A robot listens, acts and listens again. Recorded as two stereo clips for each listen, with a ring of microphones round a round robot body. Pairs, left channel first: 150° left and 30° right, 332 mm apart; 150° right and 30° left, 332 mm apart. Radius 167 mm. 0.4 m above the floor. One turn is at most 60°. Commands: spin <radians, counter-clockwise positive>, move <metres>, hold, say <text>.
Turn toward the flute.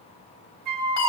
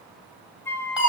spin -1.05
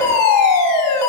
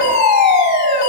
hold
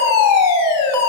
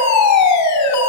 hold
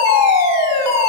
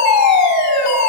say Facing where the flute came from. I can't hear it now.